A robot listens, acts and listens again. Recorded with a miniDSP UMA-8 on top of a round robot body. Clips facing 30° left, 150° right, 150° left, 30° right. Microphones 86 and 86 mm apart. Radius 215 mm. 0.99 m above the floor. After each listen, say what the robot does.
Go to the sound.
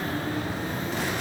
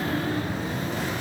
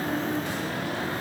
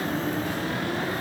Keep listening.
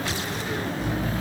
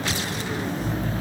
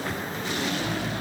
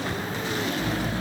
Turn 30° left.
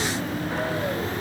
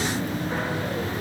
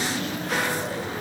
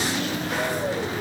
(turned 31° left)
Keep listening.
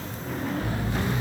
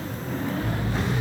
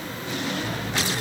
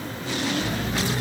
Drive 1.0 m forward.
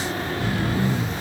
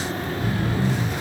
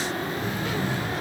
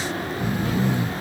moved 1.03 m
Drive 1.0 m forward.
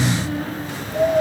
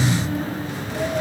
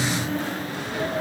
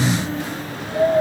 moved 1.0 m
Turn 10° left.
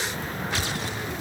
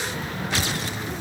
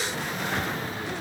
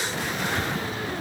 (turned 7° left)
Keep listening.
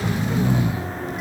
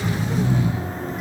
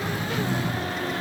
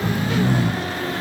Drive 1.0 m forward.
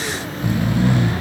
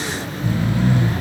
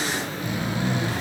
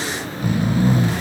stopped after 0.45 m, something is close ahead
Turn 15° left.
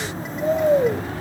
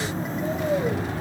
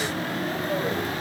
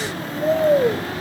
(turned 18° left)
I am next to the snoring.